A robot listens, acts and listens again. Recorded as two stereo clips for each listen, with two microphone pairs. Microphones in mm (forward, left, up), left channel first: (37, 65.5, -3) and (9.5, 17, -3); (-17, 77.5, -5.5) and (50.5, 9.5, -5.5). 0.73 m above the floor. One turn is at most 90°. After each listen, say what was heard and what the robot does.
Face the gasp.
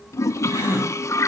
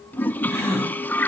The gasp: 105° right. Turn 90° right.
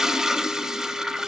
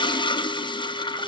Nothing new. It was at 15° right. Turn 15° right.
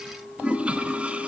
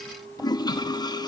I heard a gasp from this way, but can't make it out now.